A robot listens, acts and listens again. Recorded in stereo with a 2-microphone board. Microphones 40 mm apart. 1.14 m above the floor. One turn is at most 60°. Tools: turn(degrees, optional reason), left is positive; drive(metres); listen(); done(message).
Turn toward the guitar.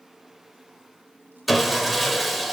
listen()
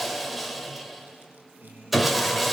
turn(degrees=-60, reason="The guitar: about 65° right or 115° right.")
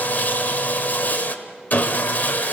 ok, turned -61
listen()
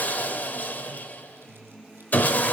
done("Facing the guitar.")